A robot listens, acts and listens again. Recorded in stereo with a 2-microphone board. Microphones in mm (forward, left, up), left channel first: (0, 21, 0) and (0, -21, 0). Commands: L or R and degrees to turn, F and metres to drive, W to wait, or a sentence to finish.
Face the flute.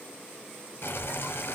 W
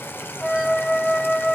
L30
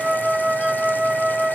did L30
R25
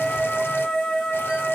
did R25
L10
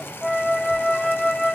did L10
Found it: a flute, straight ahead.